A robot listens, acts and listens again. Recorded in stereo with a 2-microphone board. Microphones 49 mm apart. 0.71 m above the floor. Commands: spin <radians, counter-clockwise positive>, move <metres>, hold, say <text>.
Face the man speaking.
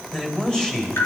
spin 0.52
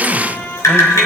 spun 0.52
hold
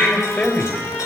spin 2.44
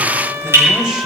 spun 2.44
hold
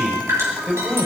spin -0.17
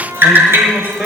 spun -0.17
say Facing the man speaking.